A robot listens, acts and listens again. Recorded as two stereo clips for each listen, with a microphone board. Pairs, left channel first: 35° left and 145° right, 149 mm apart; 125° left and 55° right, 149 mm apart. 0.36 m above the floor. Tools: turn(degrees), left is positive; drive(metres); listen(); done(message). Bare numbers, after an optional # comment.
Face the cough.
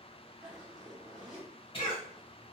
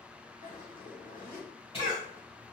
# The cough: 80° left.
turn(80)
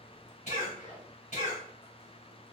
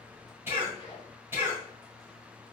# The cough is now 15° left.
turn(15)
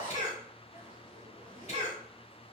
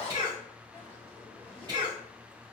done("Facing the cough, 1 to 2 m away.")